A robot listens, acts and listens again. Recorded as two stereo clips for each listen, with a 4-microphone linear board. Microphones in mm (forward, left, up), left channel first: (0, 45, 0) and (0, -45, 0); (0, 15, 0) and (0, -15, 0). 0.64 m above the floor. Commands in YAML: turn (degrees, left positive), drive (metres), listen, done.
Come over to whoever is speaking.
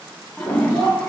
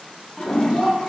turn: -35
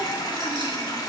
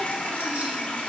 listen: true
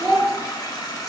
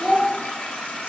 drive: 1.0
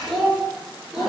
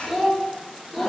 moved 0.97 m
drive: 1.0
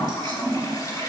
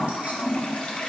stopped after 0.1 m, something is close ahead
listen: true
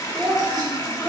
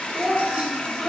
done: "I am next to the child speaking."